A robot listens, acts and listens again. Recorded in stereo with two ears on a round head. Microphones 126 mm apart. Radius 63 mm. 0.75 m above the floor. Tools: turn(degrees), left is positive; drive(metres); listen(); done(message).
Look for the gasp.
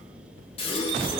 turn(degrees=40)
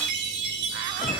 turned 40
listen()
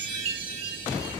done("I heard a gasp, but can't make it out now. It was about straight ahead or 100° left.")